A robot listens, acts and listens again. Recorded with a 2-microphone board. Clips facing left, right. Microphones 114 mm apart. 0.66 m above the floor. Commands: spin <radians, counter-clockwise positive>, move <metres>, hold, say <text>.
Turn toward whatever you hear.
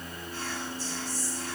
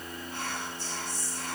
spin -1.05
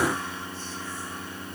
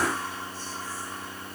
hold
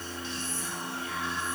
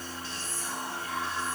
spin -0.79
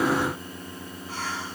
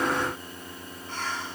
say Facing the whispering, 1 to 2 m away.